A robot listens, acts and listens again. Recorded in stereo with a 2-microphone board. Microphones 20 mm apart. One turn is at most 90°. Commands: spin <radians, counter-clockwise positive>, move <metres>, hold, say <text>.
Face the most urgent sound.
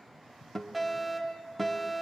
spin 0.52
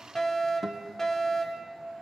spin 1.57
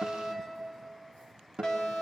spin 0.79
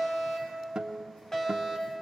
spin 0.44
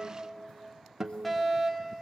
say Facing the fire alarm, 2 to 4 m away.